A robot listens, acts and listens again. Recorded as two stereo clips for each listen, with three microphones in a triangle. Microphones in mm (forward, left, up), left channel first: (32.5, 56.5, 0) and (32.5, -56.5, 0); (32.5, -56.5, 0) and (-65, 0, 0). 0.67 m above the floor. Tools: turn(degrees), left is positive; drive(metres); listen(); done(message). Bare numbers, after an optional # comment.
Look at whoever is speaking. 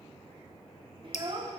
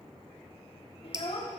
# The child speaking: 50° right.
turn(-50)
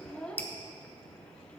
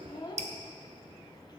# The child speaking is now 10° left.
turn(10)
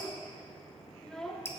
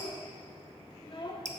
done("Facing the child speaking, 1 to 2 m away.")